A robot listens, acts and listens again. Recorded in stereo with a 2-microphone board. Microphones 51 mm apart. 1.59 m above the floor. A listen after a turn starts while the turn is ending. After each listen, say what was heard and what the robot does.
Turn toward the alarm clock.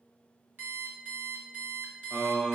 The alarm clock: about 40° right or 140° right. Turn 40° right.
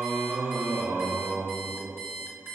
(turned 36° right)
So it is at 95° right. Turn 95° right.
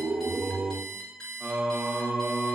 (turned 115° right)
The alarm clock is now 20° left. Turn 20° left.
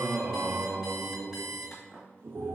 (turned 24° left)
Found it: an alarm clock, straight ahead.